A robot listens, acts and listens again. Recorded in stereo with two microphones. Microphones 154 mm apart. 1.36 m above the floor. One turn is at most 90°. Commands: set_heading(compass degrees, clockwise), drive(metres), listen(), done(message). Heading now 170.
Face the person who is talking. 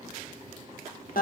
listen()
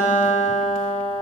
listen()
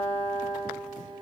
done("I can't make out anyone speaking, only a guitar.")